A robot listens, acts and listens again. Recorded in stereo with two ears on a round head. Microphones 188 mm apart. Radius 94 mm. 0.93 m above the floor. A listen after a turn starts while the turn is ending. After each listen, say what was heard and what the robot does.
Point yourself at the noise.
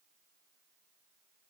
Keep listening.
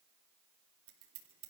The scissors: about 75° right or 105° right. Turn 75° right.
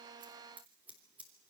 So it is at 10° right. Turn 10° right.
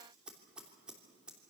Facing the scissors, 2 to 4 m away.